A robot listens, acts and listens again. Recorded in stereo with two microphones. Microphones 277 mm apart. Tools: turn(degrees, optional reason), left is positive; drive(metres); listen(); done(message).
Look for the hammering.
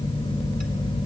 listen()
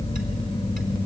listen()
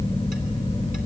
done("I can't make out hammering to turn to.")